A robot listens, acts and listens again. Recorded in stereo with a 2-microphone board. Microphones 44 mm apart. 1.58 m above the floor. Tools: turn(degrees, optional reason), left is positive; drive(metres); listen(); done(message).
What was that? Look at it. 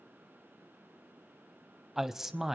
turn(degrees=-30)
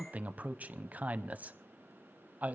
turn(degrees=-140, reason="So it is at 140° right.")
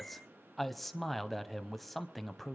done("Facing the man speaking.")